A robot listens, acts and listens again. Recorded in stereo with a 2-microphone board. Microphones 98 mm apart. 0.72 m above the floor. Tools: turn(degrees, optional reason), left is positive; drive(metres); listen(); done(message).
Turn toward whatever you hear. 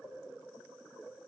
listen()
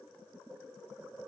listen()
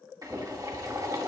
turn(degrees=-35, reason="The boiling: about 35° right or 145° right.")
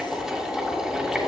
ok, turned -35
done("Facing the boiling.")